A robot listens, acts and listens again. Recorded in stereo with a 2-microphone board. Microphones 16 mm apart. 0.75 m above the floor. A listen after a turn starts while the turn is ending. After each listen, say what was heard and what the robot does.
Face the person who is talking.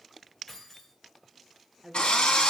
Turn 30° right.
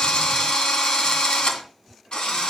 Keep listening.
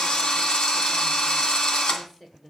So it is at 25° left. Turn 25° left.
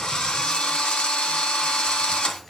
Keep listening.
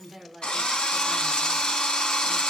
Facing the woman speaking.